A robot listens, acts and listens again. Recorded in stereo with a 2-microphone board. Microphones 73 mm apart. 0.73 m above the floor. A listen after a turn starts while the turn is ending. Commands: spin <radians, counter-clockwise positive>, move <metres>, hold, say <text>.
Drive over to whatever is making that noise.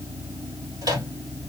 spin -1.05
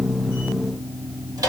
spin -1.05
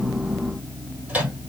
spin -0.35
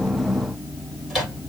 move 1.0
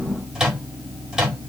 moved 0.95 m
spin -0.17
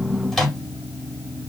move 1.0
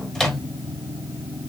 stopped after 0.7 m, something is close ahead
say I am next to the microwave.